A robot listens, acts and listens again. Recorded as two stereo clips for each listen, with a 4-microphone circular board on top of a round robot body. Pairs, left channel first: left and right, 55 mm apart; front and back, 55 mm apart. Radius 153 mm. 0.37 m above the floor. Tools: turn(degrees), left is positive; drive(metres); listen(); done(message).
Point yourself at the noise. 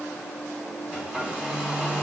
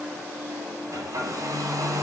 turn(degrees=-165)
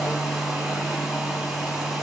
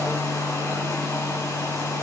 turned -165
done("Facing the hair dryer, 2 to 4 m away.")